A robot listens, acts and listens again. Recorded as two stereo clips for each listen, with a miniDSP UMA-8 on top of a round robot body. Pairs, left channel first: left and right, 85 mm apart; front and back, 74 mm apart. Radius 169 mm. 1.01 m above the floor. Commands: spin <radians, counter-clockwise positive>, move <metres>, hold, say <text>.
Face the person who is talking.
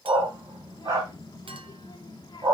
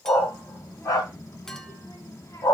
spin 0.87
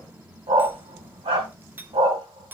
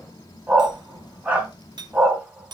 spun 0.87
spin -0.44
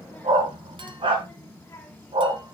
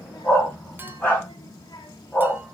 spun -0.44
spin 0.35
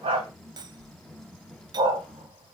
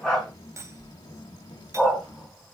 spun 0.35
say Found it: a child speaking, straight ahead, 1 to 2 m away.